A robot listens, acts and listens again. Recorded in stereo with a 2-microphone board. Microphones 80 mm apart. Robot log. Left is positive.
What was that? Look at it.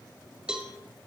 cmd yaw -30
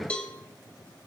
note: So it is at 15° left.
cmd yaw +15
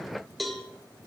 end: Found it: a cowbell, straight ahead.